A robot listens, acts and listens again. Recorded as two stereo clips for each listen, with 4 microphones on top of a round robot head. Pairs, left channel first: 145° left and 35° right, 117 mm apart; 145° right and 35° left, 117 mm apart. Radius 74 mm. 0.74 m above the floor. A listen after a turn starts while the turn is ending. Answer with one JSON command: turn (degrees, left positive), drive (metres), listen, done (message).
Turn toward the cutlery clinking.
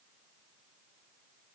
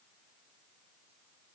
{"listen": true}
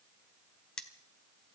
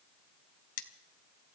{"turn": -135}
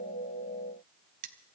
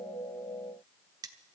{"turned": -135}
{"turn": -25}
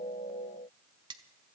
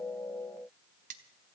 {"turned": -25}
{"turn": 20}
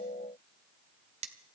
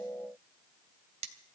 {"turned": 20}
{"done": "Facing the cutlery clinking, 1 to 2 m away."}